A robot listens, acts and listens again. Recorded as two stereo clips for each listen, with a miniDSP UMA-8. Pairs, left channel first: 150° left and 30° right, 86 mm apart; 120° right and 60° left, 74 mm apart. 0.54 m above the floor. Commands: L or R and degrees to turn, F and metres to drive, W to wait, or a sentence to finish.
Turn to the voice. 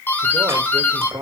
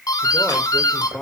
R50
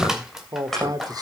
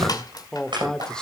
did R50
R40
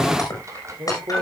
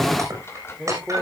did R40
R40
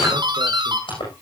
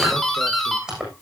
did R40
W
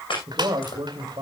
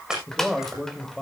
R30
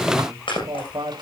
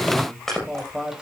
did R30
R20
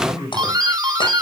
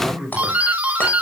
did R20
Facing the man speaking, 2 to 4 m away.